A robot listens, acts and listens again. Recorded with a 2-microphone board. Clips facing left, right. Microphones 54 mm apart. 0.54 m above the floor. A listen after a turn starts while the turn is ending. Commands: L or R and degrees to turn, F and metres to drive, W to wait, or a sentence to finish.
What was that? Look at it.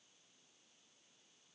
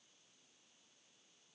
W
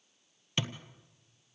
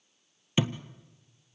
R30
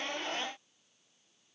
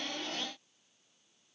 W
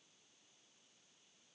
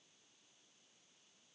I heard a thud, but can't make it out now. It was about 20° left or 140° right.